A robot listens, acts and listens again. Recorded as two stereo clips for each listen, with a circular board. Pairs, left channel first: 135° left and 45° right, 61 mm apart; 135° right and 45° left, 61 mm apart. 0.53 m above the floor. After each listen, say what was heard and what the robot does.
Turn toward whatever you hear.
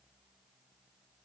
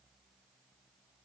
Keep listening.
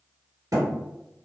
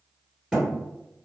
The thud: 35° right. Turn 35° right.
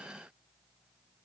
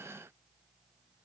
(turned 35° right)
I heard a thud from this way, but can't make it out now.